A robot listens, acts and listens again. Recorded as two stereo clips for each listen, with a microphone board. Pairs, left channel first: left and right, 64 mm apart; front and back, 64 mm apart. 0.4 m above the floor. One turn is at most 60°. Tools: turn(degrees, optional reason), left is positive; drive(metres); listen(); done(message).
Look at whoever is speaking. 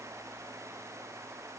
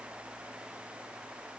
listen()
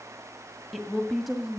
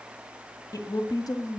done("Facing the woman speaking.")